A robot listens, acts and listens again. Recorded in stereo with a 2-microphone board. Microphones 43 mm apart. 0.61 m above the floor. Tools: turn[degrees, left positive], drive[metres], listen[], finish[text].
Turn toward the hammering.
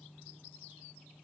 Action: listen[]
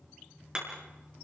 Thought: The hammering: about 20° right or 160° right.
Action: turn[-20]
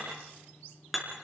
Action: finish[Found it: hammering, straight ahead.]